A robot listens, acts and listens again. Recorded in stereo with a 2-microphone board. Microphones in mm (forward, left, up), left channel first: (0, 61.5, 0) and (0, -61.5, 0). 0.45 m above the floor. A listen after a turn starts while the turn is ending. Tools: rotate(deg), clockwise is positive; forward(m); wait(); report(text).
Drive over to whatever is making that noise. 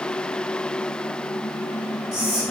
rotate(40)
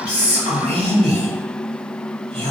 rotate(90)
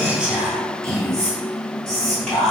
forward(1.0)
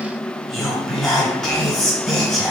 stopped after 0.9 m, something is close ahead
report("I am next to the whispering.")